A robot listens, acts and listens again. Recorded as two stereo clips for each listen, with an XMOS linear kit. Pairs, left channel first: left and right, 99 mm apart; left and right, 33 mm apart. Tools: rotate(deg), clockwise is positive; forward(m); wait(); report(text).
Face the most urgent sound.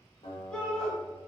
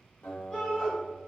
rotate(-30)
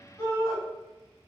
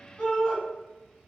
rotate(-150)
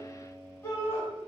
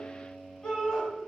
rotate(-30)
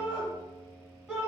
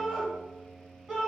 report("Facing the shout, 1 to 2 m away.")